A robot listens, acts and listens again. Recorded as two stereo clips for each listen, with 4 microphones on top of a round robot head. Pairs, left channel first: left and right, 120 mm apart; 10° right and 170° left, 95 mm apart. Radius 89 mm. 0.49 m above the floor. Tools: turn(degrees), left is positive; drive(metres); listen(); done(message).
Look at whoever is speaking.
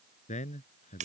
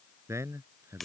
turn(degrees=110)
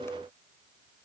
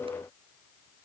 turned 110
listen()
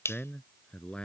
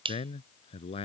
done("Found it: a man speaking, straight ahead.")